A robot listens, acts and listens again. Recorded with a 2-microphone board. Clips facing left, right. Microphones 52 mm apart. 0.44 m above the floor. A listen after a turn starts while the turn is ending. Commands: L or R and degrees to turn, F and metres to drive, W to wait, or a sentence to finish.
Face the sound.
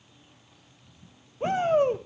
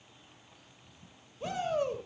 L40
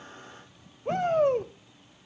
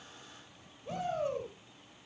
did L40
L90
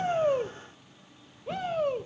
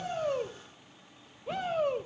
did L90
Found it: a shout, straight ahead.